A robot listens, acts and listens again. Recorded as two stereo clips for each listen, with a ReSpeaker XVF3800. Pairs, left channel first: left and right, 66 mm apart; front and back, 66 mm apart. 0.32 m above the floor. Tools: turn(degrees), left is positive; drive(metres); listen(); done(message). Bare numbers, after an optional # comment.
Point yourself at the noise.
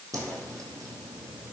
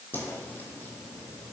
# The whoosh: 60° right.
turn(-60)
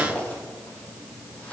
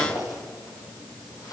# The whoosh is now 20° left.
turn(20)
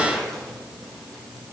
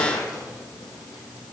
done("Facing the whoosh, 2 to 4 m away.")